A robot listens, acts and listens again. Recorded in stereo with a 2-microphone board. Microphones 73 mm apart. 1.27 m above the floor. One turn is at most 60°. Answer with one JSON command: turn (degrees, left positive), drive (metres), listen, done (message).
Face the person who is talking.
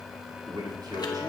{"turn": -60}
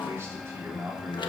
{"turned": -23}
{"turn": -30}
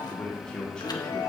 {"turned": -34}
{"turn": 10}
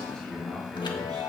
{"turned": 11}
{"turn": 10}
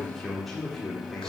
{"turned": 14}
{"done": "Facing the man speaking, over 4 m away."}